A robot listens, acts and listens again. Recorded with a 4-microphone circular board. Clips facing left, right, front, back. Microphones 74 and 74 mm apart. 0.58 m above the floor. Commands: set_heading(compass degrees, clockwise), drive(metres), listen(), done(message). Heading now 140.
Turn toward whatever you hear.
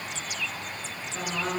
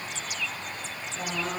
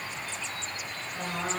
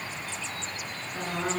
set_heading(40)
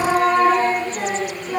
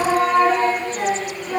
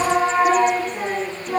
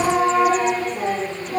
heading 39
set_heading(29)
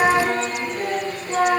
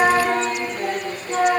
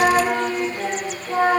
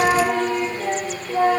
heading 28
done("Found it: singing, straight ahead.")